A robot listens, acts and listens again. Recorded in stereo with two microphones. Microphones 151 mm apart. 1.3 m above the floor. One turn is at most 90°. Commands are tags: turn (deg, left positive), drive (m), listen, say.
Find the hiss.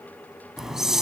<turn deg="30"/>
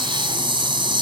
<turn deg="-35"/>
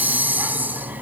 <turn deg="-10"/>
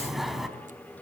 <say>Found it: a hiss, straight ahead, 2 to 4 m away.</say>